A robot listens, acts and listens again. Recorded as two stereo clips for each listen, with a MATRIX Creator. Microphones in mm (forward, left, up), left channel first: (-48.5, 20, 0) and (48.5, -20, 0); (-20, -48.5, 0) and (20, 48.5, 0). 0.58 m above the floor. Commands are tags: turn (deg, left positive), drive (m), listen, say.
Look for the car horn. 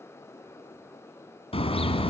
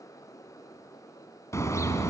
<turn deg="-175"/>
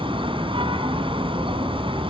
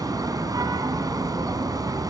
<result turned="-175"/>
<turn deg="15"/>
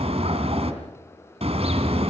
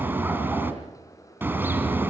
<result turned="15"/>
<say>Facing the car horn.</say>